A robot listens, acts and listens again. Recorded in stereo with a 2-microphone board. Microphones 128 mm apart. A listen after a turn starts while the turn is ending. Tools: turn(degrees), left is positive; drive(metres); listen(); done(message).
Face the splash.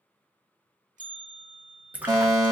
turn(degrees=-30)
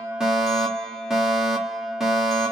listen()
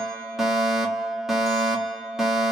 done("I heard a splash, but can't make it out now. It was about 20° left or 140° right.")